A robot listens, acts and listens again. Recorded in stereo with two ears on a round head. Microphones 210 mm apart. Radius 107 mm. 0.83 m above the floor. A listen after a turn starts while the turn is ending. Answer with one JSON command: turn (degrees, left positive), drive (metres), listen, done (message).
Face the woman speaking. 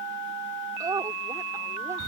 {"turn": -15}
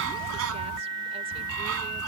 {"listen": true}
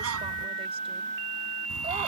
{"listen": true}
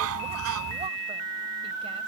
{"done": "I heard a woman speaking, but can't make it out now. It was about straight ahead or 150° right."}